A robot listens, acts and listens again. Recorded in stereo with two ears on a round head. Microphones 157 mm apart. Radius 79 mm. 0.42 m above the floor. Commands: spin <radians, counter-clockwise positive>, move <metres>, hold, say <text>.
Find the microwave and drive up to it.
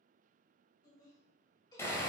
hold
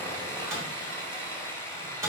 spin -0.35
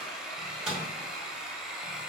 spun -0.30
move 1.0
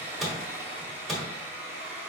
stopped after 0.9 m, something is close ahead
say I am next to the microwave.